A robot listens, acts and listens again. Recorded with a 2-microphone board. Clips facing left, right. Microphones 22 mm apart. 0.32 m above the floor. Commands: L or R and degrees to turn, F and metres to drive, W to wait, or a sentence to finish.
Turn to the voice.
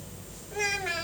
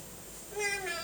L40
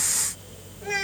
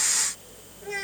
L95
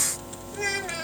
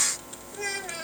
L20
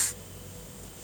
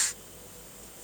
W
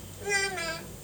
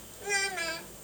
Facing the child speaking, 1 to 2 m away.